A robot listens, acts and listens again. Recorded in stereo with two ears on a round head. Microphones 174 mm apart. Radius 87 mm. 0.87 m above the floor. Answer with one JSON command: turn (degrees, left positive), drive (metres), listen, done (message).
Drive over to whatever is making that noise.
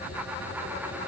{"listen": true}
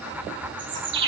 {"turn": -65}
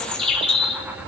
{"drive": 1.0}
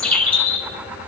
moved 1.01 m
{"drive": 1.0}
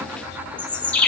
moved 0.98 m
{"drive": 1.0}
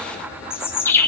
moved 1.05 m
{"turn": 10}
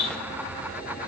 {"drive": 1.0}
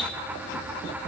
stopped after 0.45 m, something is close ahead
{"listen": true}
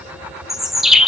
{"done": "Arrived at the bird, straight ahead."}